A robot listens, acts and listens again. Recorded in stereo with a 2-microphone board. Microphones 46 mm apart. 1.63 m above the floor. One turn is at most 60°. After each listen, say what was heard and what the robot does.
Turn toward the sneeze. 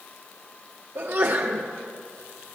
The sneeze: about 55° right or 125° right. Turn 55° right.
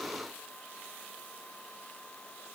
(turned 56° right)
Keep listening.
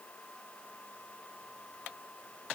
I heard a sneeze, but can't make it out now. It was about straight ahead or 70° right.